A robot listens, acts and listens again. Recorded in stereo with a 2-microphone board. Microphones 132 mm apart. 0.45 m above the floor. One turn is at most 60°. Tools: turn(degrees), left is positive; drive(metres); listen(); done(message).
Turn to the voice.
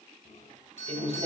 turn(degrees=-50)
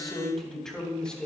done("Found it: a man speaking, straight ahead.")